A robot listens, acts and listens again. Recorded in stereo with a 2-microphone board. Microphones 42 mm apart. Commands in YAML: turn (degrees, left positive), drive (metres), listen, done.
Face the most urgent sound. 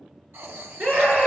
turn: -45
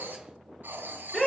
done: "Facing the scream."